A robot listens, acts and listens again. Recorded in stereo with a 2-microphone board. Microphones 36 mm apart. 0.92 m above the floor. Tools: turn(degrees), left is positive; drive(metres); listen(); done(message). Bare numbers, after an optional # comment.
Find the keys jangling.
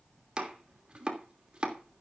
listen()
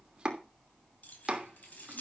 # The keys jangling: about 60° left or 120° left.
turn(60)
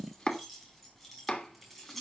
done("Facing the keys jangling, over 4 m away.")